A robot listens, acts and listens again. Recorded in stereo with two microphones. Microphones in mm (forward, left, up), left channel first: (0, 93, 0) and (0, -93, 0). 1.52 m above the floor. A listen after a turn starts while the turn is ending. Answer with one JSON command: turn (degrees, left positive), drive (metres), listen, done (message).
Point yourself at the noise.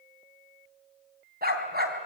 {"turn": -55}
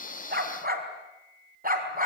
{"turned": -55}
{"turn": -45}
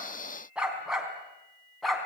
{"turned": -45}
{"done": "Found it: a dog barking, straight ahead, over 4 m away."}